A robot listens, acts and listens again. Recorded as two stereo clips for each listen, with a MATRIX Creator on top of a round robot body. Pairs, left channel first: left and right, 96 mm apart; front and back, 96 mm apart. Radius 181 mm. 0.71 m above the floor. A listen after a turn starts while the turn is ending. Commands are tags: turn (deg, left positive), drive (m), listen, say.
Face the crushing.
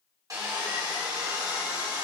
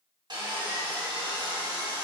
<listen/>
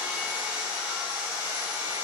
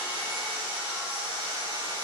<listen/>
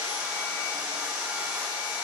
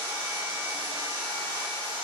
<say>I can't make out crushing to turn to.</say>